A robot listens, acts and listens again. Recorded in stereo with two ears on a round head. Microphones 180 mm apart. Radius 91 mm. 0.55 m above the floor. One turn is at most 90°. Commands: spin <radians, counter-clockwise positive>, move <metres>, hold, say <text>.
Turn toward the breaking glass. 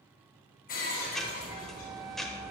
spin 0.70
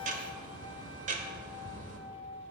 hold
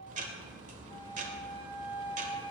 say I heard breaking glass, but can't make it out now. It was about straight ahead or 100° left.